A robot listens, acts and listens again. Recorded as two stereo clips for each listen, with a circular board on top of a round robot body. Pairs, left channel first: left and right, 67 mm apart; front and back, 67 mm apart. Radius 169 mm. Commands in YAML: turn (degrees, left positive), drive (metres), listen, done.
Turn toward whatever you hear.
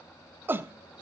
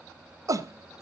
turn: -145
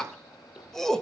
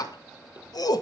turn: 10
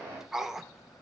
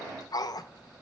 done: "Facing the shout, 1 to 2 m away."